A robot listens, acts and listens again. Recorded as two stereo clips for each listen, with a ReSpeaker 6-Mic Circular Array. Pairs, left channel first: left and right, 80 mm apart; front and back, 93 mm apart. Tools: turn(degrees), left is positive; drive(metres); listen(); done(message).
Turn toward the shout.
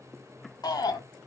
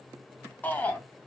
turn(degrees=70)
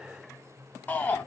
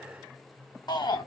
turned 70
turn(degrees=25)
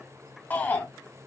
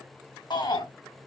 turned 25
turn(degrees=25)
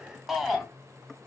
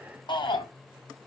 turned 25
done("Found it: a shout, straight ahead, 2 to 4 m away.")